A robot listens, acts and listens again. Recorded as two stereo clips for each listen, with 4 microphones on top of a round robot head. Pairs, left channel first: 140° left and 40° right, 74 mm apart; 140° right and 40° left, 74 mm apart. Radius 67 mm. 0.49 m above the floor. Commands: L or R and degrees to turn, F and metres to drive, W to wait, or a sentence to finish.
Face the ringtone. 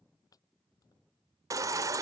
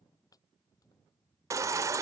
W
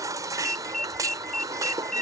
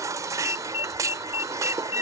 R140
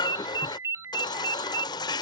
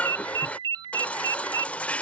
L15
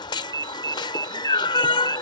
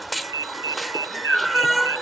Facing the ringtone.